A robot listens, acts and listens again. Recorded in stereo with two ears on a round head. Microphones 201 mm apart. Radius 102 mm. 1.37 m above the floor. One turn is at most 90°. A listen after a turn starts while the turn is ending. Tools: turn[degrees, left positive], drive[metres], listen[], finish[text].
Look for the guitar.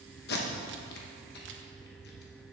Action: listen[]
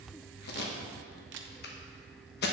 Action: listen[]
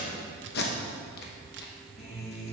Thought: The guitar: about 30° left or 150° left.
Action: turn[30]
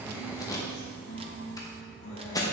Thought: So it is at 115° left.
Action: turn[90]
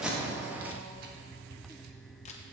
Thought: Nothing new. It was at 25° left.
Action: turn[25]
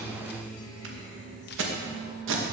Thought: The guitar is now 35° left.
Action: turn[35]
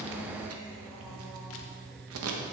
Thought: The guitar is now 10° left.
Action: turn[10]
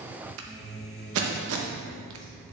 Action: finish[Facing the guitar, 1 to 2 m away.]